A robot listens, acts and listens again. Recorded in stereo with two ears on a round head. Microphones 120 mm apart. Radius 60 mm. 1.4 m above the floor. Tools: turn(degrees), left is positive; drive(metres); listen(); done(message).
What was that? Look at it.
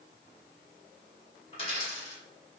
turn(degrees=45)
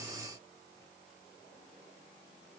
listen()
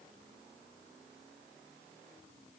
done("I heard a dropped coin, but can't make it out now. It was about straight ahead or 90° left.")